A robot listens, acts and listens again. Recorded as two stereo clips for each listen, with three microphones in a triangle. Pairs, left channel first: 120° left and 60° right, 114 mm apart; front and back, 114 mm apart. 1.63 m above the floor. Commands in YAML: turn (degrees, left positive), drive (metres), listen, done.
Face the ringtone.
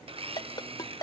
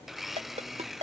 turn: 170
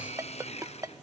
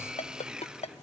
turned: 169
done: "Found it: a ringtone, straight ahead."